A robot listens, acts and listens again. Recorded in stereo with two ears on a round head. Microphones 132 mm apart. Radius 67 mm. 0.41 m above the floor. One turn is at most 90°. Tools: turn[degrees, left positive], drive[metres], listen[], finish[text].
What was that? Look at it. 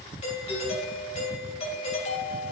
Thought: The doorbell: about 45° left or 135° left.
Action: turn[45]
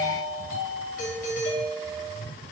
Thought: So it is at 80° left.
Action: turn[80]
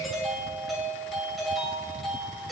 Action: finish[Facing the doorbell.]